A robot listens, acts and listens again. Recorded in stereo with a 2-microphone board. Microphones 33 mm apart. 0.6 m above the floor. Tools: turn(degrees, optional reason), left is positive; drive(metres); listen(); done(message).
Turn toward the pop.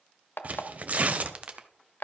turn(degrees=-30, reason="The pop: about 30° right or 150° right.")
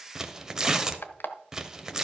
listen()
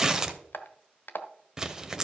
done("I heard a pop, but can't make it out now. It was about straight ahead or 120° right.")